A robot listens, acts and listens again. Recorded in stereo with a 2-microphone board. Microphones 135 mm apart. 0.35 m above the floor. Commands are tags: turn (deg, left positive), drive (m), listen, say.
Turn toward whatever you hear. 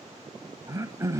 <turn deg="-25"/>
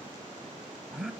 <say>Facing the throat clearing, 1 to 2 m away.</say>